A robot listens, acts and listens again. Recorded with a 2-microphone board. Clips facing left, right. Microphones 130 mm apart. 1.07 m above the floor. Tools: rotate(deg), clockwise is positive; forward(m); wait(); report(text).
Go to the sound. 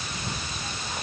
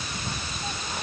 wait()
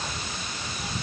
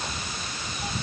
wait()
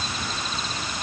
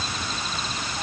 report("I can't make out anything.")